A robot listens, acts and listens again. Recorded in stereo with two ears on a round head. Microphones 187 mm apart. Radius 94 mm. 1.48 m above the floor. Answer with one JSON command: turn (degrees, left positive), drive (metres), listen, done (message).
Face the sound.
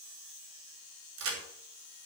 {"turn": -90}
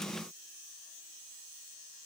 {"done": "I heard a crack from this way, but can't make it out now."}